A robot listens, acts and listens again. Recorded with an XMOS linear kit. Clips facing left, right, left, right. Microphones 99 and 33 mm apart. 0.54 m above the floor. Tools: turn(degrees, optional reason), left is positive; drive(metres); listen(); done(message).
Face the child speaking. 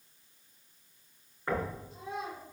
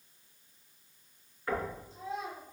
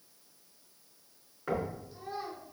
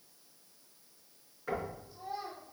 turn(degrees=70, reason="The child speaking: about 70° left or 110° left.")
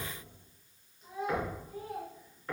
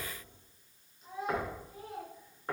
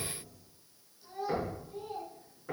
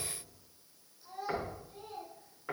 done("Facing the child speaking.")